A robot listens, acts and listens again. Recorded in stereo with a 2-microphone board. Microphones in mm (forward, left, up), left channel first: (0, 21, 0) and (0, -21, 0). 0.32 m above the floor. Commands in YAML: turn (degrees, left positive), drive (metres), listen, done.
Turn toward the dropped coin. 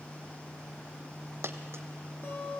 turn: -75
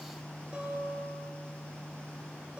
listen: true
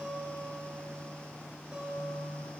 done: "I heard a dropped coin, but can't make it out now. It was about straight ahead or 30° right."